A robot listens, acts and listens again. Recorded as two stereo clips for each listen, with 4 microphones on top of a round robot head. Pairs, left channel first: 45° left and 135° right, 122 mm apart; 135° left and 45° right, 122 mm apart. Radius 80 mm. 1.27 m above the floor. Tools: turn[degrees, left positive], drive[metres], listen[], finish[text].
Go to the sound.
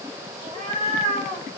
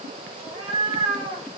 Thought: The cat meowing: 100° right.
Action: turn[-100]
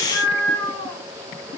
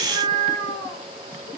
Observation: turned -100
Thought: The cat meowing is now 15° right.
Action: turn[-15]
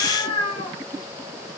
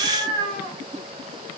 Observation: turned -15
Action: drive[1.0]
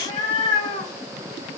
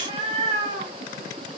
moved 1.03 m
Action: drive[1.0]
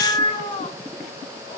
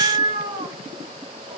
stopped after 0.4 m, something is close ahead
Action: finish[Arrived at the cat meowing, straight ahead.]